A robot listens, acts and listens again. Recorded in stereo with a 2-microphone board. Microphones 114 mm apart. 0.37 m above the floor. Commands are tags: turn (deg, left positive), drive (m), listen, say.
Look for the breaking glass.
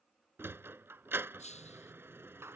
<turn deg="90"/>
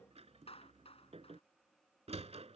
<say>Facing where the breaking glass came from. I can't hear it now.</say>